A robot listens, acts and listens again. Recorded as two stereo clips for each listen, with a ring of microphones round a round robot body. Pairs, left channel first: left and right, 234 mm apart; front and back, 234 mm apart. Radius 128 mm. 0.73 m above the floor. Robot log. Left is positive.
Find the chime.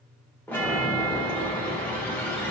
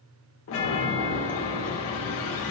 note: The chime: 10° left.
cmd yaw +10
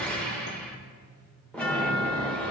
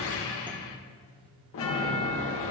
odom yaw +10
end: Facing the chime.